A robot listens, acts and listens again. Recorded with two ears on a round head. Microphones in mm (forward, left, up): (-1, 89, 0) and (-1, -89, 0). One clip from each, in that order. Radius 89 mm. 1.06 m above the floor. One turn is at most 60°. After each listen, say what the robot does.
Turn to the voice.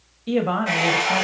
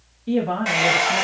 Turn 55° left.
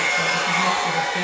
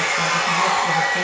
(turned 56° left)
Keep listening.
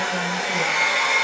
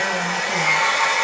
Keep listening.
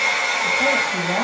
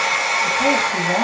I heard a woman speaking, but can't make it out now. It was about 5° right or 70° left.